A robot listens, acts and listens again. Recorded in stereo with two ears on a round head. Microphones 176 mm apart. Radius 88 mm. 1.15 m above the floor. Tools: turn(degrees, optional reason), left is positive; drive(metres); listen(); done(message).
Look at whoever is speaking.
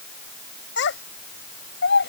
turn(degrees=65, reason="The child speaking: about 65° left or 115° left.")
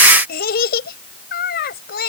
turn(degrees=50, reason="So it is at 50° left.")
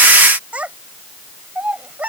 done("Facing the child speaking.")